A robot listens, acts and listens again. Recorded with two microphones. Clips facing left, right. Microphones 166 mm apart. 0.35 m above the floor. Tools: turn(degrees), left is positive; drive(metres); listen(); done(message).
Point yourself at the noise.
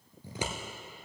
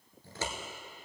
turn(degrees=15)
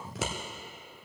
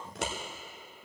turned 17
done("Found it: scissors, straight ahead.")